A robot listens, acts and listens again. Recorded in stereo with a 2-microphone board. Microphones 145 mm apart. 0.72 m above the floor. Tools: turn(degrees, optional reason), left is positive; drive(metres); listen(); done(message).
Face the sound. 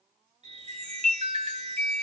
turn(degrees=-45, reason="The chime: about 45° right or 135° right.")
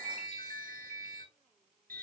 turn(degrees=-85, reason="So it is at 85° right.")
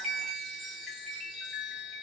done("Found it: a chime, straight ahead.")